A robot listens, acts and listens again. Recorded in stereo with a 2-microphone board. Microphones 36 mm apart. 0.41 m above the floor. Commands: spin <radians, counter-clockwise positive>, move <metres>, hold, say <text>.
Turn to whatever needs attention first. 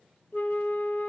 hold
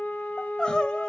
spin 0.44
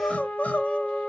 spin 2.27
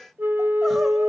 hold
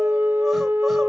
hold
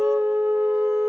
say Facing where the crying came from. I can't hear it now.